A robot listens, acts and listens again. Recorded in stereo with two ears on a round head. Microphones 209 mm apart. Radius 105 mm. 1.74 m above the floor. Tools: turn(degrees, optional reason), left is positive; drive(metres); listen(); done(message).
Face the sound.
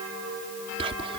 turn(degrees=-25, reason="The whispering: about 25° right or 155° right.")
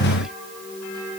listen()
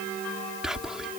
done("Found it: whispering, straight ahead.")